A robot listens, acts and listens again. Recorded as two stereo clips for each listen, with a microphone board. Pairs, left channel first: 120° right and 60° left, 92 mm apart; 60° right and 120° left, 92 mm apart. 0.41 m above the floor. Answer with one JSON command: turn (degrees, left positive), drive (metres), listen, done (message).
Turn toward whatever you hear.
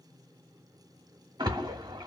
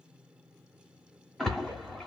{"turn": 25}
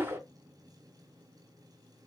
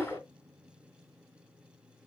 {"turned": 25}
{"done": "Found it: a splash, straight ahead, under 1 m away."}